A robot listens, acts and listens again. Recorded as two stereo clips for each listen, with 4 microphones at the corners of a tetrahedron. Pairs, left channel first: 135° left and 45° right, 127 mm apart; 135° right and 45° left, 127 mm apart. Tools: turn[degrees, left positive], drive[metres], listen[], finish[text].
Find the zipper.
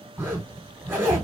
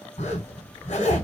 Thought: The zipper: 120° right.
Action: turn[-120]
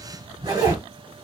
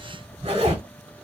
Thought: The zipper is now 10° left.
Action: turn[10]
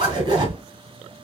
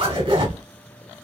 Action: finish[Found it: a zipper, straight ahead.]